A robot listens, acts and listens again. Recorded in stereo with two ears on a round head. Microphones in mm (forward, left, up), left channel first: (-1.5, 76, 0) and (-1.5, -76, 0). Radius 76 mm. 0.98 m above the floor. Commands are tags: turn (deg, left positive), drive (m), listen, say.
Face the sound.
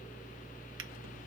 <listen/>
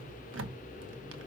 <turn deg="-90"/>
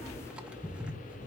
<say>Facing the drawer, under 1 m away.</say>